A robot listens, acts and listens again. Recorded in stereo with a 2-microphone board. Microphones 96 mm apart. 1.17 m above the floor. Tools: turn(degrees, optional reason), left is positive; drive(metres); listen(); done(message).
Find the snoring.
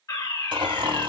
turn(degrees=-55, reason="The snoring: about 55° right or 125° right.")
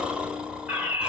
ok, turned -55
turn(degrees=-10, reason="So it is at 10° right.")
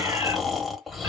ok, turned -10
done("Facing the snoring, 1 to 2 m away.")